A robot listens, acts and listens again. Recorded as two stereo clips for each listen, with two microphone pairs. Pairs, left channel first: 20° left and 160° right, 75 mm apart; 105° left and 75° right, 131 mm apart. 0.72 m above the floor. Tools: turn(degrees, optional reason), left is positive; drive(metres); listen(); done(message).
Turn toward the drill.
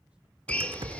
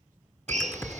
turn(degrees=-55, reason="The drill: 55° right.")
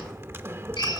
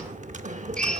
turn(degrees=25, reason="The drill is now 25° left.")
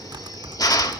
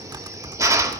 turn(degrees=-10, reason="The drill is now 10° right.")
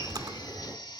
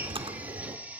listen()
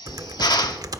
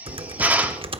done("Found it: a drill, straight ahead.")